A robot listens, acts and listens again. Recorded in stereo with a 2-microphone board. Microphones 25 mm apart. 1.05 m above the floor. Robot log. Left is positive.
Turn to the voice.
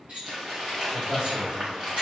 note: The man speaking: about 55° right or 125° right.
cmd yaw -55
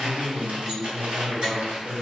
end: Facing the man speaking.